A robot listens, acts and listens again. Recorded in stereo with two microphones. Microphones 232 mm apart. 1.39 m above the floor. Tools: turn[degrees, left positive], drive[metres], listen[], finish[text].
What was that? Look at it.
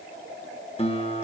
Thought: The guitar: about 25° left or 155° left.
Action: turn[25]
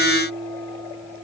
Action: finish[Facing the guitar.]